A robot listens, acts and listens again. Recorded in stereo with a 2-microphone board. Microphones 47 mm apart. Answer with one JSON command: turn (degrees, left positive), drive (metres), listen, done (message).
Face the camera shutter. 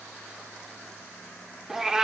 {"listen": true}
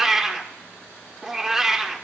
{"listen": true}
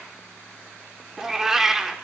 {"done": "I can't make out a camera shutter to turn to."}